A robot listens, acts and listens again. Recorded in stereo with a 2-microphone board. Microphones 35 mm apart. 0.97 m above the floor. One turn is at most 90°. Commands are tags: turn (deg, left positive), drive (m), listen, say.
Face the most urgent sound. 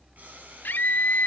<turn deg="90"/>
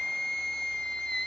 <turn deg="10"/>
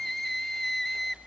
<say>Found it: a scream, straight ahead, 2 to 4 m away.</say>